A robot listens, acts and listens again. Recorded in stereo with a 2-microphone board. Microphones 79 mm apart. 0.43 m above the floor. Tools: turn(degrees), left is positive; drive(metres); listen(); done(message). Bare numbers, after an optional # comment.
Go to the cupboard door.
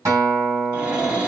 turn(-30)
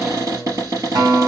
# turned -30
# So it is at 135° right.
turn(-135)
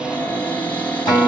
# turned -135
# The cupboard door is now 25° left.
turn(25)
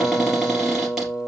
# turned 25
listen()
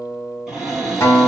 drive(1.0)
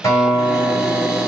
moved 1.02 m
listen()
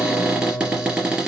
# The cupboard door is now 10° right.
turn(-10)
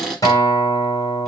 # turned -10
drive(1.0)
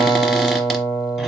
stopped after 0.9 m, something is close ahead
listen()
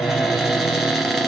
done("I am next to the cupboard door.")